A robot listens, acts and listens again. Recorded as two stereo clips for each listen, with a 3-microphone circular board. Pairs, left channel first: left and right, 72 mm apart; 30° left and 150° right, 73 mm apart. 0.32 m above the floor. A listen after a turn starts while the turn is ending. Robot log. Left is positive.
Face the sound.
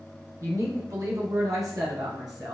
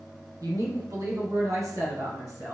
note: The woman speaking: 110° right.
cmd yaw -110
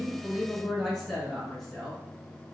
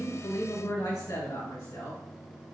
end: Found it: a woman speaking, straight ahead.